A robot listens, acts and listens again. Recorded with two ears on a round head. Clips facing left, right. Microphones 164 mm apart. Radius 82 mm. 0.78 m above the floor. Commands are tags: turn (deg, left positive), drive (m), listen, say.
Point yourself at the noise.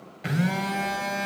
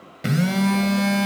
<turn deg="-50"/>
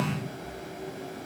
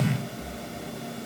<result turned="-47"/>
<turn deg="-70"/>
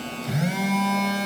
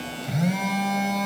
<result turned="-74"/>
<say>Found it: a phone buzzing, straight ahead.</say>